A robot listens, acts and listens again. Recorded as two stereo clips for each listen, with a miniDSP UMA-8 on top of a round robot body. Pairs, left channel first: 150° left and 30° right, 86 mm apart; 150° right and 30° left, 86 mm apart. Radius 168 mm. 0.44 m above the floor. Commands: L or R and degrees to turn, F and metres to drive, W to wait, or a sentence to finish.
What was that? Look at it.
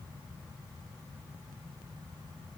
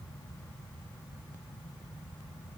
W
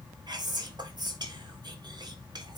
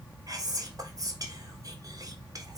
R10
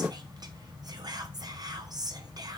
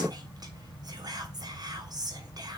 Found it: whispering, straight ahead.